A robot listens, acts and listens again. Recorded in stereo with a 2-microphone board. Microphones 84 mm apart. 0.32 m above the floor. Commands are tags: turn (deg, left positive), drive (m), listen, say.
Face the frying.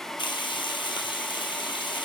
<turn deg="75"/>
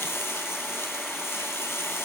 <turn deg="35"/>
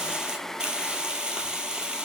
<turn deg="-10"/>
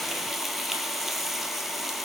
<say>Found it: frying, straight ahead, 1 to 2 m away.</say>